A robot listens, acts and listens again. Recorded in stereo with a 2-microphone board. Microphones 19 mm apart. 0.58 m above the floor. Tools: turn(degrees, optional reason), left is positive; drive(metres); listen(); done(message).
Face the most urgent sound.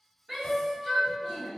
turn(degrees=-30, reason="The shout: about 30° right or 150° right.")
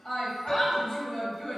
done("Found it: a shout, straight ahead, 1 to 2 m away.")